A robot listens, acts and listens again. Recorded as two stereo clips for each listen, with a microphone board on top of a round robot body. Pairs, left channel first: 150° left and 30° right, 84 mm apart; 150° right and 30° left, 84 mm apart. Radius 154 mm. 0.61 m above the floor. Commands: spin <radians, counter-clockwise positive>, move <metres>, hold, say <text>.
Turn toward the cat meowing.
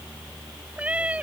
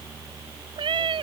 spin 0.79
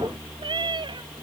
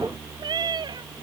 say Facing the cat meowing.